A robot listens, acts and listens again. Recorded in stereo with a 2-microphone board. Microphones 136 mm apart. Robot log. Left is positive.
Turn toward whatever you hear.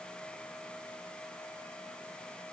cmd idle
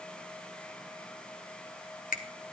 cmd yaw +90
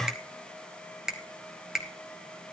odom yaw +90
end: Facing the finger snap.